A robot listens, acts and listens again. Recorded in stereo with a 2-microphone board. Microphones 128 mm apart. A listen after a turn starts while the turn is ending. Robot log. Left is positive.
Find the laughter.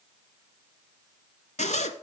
cmd idle
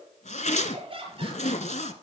note: The laughter: about 45° right or 135° right.
cmd yaw -45
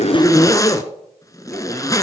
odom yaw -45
cmd idle
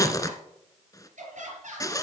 note: So it is at 105° right.
cmd yaw -105
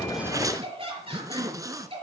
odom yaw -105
note: The laughter is now 50° right.
cmd yaw -50
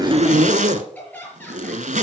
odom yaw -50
note: The laughter is now 10° left.
cmd yaw +10
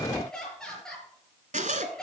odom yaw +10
end: Facing the laughter.